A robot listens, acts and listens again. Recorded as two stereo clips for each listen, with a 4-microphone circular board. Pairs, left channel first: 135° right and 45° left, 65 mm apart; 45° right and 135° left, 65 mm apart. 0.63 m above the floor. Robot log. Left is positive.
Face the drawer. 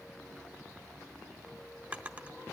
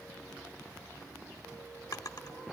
note: The drawer: 25° right.
cmd yaw -25
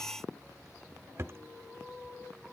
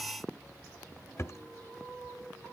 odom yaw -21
end: Found it: a drawer, straight ahead, under 1 m away.